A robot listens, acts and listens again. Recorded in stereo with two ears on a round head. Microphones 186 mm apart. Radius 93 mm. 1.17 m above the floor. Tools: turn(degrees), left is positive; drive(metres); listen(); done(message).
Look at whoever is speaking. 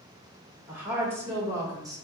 turn(degrees=-20)
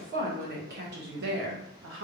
turn(degrees=-110)
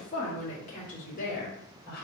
turn(degrees=50)
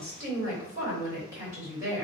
turn(degrees=-15)
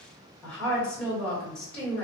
done("Facing the woman speaking, 1 to 2 m away.")